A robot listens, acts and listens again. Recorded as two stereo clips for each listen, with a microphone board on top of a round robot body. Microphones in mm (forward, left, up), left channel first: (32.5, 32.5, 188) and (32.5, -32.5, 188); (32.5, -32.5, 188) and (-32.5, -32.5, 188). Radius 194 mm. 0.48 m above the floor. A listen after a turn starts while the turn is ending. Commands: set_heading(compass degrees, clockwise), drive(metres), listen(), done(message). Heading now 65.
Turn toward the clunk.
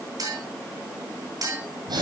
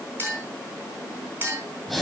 listen()
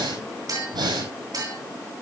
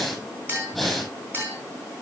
listen()
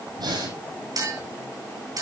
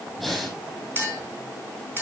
done("I can't make out a clunk, only a clink and breathing.")